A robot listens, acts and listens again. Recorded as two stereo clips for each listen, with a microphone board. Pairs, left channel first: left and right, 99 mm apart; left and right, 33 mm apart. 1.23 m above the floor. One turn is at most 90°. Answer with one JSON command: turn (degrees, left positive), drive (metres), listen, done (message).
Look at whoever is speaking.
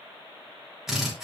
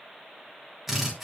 {"listen": true}
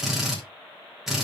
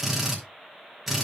{"listen": true}
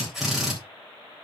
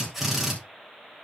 {"done": "I can't make out anyone speaking, only a drill."}